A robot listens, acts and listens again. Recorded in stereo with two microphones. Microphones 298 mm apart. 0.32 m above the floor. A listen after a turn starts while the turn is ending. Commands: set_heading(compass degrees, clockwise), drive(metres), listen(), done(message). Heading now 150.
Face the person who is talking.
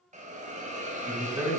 set_heading(180)
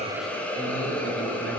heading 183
listen()
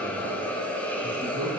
set_heading(318)
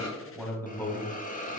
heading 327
set_heading(317)
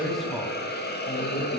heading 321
done("Found it: a man speaking, straight ahead.")